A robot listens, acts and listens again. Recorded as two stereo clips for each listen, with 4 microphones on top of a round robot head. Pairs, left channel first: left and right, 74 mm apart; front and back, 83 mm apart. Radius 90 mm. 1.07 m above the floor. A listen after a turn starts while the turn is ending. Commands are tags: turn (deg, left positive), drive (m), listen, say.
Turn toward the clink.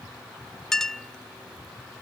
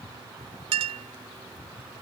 <turn deg="175"/>
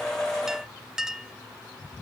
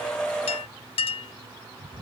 <say>Facing the clink.</say>